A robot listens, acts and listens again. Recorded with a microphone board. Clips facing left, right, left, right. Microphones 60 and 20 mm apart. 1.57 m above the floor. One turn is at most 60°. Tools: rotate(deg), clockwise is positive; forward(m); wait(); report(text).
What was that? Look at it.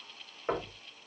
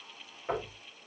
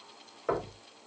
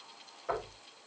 rotate(-35)
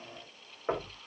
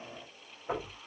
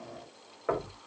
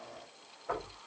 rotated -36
rotate(-60)
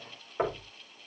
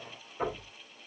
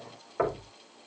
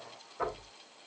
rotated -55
rotate(-55)
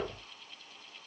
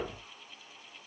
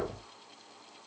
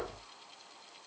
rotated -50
report("Facing the knocking, over 4 m away.")